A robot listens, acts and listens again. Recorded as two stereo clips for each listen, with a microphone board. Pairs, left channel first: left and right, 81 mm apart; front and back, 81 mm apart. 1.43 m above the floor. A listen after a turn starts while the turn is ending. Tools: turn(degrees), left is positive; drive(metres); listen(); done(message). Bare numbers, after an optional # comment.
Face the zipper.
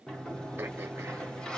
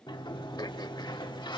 listen()
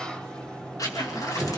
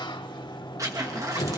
# The zipper: 135° left.
turn(135)
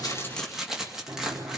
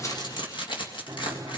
done("Facing the zipper, 2 to 4 m away.")